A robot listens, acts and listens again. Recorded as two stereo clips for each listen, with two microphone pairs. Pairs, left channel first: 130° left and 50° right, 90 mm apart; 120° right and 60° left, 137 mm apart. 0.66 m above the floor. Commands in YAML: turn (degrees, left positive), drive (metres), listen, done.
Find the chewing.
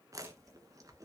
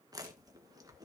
done: "Found it: chewing, straight ahead, 1 to 2 m away."